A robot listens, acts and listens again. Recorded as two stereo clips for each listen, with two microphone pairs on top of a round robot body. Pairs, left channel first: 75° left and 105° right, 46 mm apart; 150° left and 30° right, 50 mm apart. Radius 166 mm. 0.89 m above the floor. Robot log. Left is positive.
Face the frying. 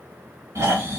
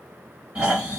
cmd idle
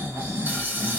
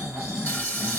note: The frying: 150° right.
cmd yaw -150
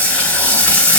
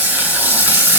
note: The frying is now 15° left.
cmd yaw +15
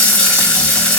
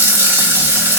end: Found it: frying, straight ahead, 1 to 2 m away.